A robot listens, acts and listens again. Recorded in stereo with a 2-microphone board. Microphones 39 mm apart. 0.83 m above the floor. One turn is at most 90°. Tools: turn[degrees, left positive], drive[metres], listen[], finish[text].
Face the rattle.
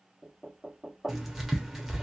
Action: listen[]
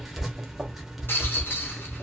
Thought: The rattle: about 70° left or 110° left.
Action: turn[70]
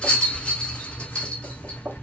Thought: So it is at 30° left.
Action: turn[30]
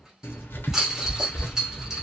Thought: The rattle is now 10° right.
Action: turn[-10]
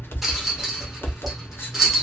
Action: finish[Facing the rattle, 1 to 2 m away.]